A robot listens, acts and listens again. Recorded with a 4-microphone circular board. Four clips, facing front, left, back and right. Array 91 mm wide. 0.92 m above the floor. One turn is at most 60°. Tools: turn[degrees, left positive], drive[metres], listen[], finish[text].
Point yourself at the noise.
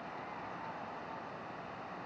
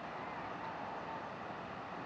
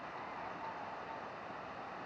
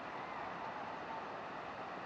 Action: listen[]
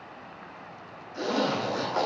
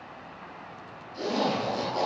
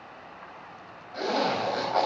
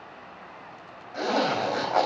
Thought: The zipper: 115° right.
Action: turn[-60]
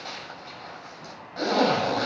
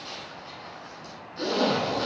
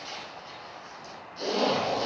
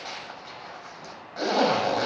Thought: The zipper is now 50° right.
Action: turn[-50]
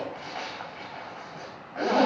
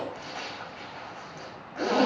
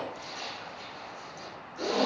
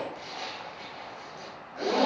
Thought: The zipper is now 10° left.
Action: turn[10]
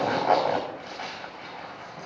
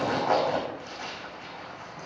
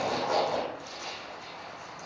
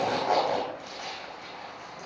Action: finish[Facing the zipper.]